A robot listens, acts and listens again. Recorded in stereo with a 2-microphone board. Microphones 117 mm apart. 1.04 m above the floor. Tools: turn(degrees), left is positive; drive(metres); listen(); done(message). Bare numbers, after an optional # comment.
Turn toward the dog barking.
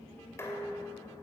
listen()
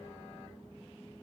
listen()
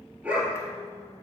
turn(-30)
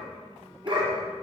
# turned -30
# So it is at 140° right.
turn(-140)
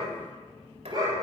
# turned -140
# The dog barking is now 35° right.
turn(-35)
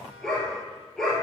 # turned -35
done("Facing the dog barking.")